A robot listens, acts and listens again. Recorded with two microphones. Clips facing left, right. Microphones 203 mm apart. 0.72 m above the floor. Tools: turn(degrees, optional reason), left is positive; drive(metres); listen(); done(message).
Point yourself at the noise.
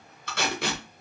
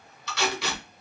turn(degrees=50, reason="The tape being pulled: about 50° left or 130° left.")
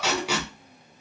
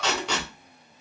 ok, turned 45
turn(degrees=10, reason="So it is at 10° left.")
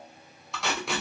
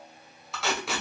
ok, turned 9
done("Facing the tape being pulled, under 1 m away.")